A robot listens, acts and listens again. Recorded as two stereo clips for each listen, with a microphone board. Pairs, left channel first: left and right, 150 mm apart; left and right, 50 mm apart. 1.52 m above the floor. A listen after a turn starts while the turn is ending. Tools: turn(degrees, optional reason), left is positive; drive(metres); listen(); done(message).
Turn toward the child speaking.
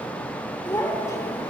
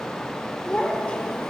turn(degrees=20, reason="The child speaking: about 20° left or 160° left.")
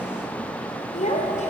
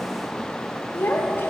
turn(degrees=125, reason="So it is at 125° left.")
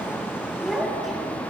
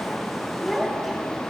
done("Facing the child speaking.")